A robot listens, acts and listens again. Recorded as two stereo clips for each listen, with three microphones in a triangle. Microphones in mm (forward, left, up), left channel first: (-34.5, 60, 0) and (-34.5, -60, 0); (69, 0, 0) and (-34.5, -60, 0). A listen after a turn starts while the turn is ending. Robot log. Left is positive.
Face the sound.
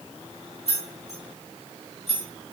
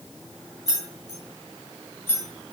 note: The keys jangling: 100° left.
cmd yaw +100
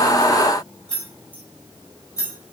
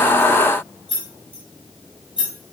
note: The keys jangling is now 40° left.
cmd yaw +40
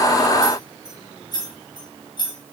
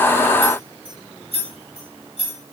note: The keys jangling is now 50° left.
cmd yaw +50
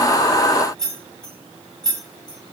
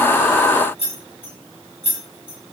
end: Found it: keys jangling, straight ahead, 1 to 2 m away.